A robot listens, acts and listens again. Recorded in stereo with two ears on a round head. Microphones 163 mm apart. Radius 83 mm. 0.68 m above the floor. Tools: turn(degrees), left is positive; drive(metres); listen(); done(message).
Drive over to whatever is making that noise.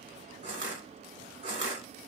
turn(degrees=-40)
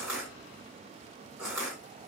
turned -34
turn(degrees=-10)
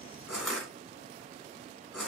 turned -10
drive(metres=1.0)
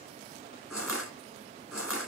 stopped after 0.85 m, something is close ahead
done("I am next to the crushing.")